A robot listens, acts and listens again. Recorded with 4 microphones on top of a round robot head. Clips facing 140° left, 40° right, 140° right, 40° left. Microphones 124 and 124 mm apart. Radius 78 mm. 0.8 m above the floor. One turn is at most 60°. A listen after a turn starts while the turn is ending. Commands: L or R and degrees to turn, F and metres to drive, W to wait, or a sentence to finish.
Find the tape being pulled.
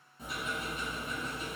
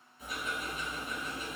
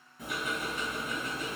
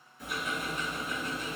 W
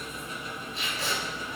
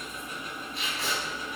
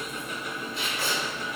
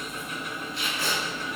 L60
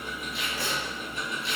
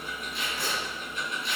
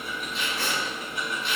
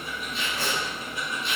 L60
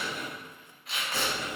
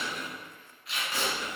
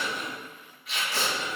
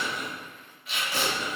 L60
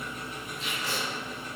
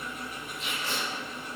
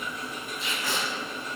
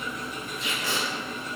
L30
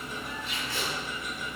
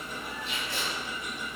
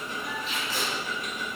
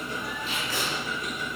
Facing the tape being pulled.